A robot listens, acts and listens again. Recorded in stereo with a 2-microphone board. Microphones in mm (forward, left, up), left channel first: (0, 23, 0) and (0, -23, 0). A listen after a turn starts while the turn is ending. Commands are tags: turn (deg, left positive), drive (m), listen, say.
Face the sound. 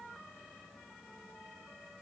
<listen/>
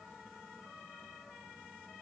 <listen/>
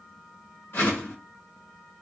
<turn deg="50"/>
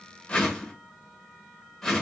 <turn deg="10"/>
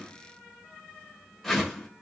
<say>Found it: a whoosh, straight ahead, 1 to 2 m away.</say>